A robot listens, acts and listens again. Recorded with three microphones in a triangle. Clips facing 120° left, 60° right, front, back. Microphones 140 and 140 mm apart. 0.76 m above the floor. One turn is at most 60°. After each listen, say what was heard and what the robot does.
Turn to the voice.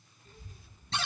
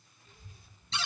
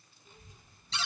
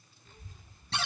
The child speaking: 75° left. Turn 60° left.
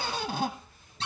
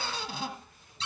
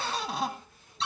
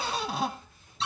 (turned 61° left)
The child speaking is now 15° left. Turn 15° left.
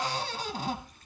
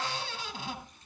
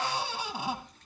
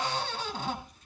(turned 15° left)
The child speaking is now 10° left. Turn 10° left.
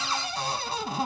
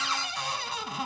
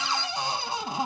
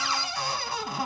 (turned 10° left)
Keep listening.
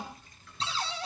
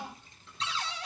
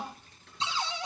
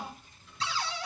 Facing the child speaking, over 4 m away.